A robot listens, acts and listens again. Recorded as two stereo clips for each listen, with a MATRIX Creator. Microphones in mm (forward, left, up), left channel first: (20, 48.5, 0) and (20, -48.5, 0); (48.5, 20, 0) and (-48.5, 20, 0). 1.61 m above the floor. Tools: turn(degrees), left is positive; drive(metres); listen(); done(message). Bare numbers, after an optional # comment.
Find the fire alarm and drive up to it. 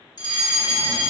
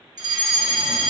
# The fire alarm: 135° left.
turn(135)
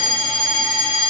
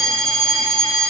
# The fire alarm is now 50° left.
turn(50)
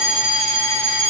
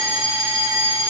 # The fire alarm is now 20° left.
turn(20)
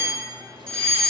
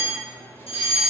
# The fire alarm is now 10° left.
turn(10)
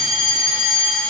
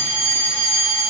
drive(1.0)
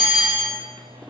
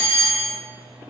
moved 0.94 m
drive(1.0)
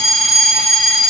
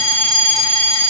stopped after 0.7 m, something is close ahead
done("Arrived at the fire alarm, straight ahead.")